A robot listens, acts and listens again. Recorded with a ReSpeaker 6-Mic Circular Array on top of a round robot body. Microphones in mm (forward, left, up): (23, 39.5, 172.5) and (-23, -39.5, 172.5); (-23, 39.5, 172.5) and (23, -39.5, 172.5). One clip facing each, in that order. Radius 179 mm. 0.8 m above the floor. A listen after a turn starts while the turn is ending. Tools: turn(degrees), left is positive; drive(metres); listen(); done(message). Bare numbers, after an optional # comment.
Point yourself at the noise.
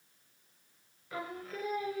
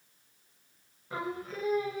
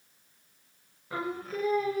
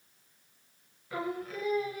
# The singing: 170° left.
turn(170)
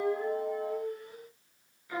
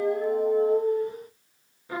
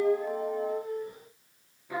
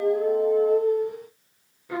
# The singing is now 65° right.
turn(-65)
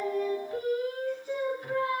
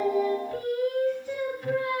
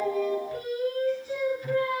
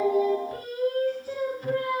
# The singing is now 15° right.
turn(-15)
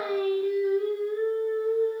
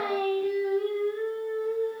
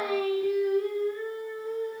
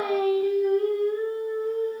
done("Facing the singing, 2 to 4 m away.")